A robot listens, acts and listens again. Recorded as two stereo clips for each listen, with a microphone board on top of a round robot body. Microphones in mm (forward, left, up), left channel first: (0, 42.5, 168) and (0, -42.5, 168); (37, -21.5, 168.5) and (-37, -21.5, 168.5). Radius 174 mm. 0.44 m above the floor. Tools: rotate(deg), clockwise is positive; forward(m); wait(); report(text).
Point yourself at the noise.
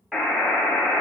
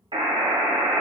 rotate(175)
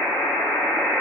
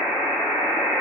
rotate(-20)
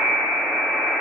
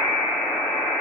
report("Found it: a buzzer, straight ahead, 1 to 2 m away.")